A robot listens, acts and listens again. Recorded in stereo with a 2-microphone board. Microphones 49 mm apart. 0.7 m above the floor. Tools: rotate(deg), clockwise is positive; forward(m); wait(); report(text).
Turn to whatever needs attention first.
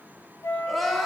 rotate(-30)
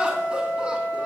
wait()
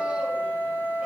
wait()
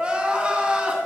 rotate(20)
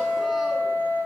wait()
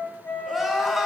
report("Found it: crying, straight ahead, 2 to 4 m away.")